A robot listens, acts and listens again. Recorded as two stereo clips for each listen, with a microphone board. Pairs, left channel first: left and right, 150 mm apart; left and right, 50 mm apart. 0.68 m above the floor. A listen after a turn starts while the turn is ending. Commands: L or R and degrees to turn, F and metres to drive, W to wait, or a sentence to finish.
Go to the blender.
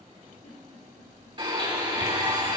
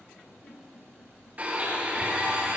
R30
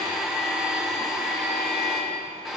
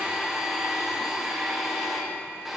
F1.0
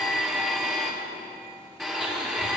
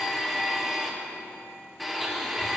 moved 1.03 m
F1.0
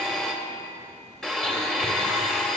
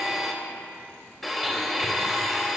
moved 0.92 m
F1.0
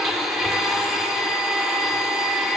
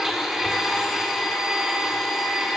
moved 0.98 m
F1.0
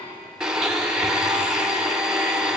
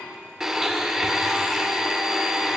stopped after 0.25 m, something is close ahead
I am next to the blender.